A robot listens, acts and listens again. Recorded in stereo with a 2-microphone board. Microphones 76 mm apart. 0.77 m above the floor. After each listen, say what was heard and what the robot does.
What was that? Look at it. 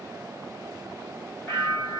The bell: about 30° left or 150° left. Turn 30° left.
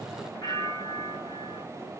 So it is at 115° left. Turn 115° left.
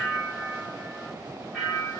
Facing the bell.